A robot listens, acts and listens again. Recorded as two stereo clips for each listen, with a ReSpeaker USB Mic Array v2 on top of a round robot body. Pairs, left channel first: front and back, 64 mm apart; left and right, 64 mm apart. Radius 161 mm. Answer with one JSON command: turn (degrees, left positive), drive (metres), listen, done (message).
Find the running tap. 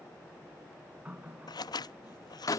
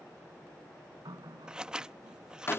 {"turn": -105}
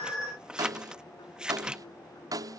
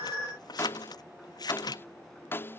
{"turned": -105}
{"listen": true}
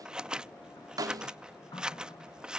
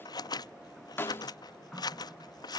{"done": "Found it: a running tap, straight ahead."}